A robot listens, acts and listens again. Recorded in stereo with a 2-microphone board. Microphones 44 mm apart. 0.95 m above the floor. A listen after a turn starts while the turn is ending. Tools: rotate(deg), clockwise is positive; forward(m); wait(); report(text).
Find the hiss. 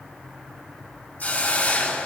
rotate(-50)
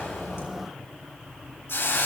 rotate(-80)
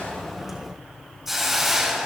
rotate(10)
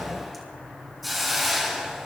report("Facing the hiss, over 4 m away.")